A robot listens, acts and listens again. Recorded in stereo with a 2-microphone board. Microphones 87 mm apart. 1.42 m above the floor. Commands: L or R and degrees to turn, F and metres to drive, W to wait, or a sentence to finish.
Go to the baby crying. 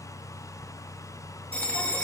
W
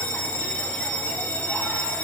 W
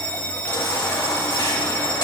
L65
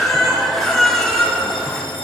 F1.0
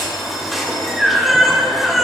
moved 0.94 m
F1.0
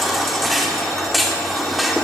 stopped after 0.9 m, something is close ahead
Arrived at the baby crying, straight ahead.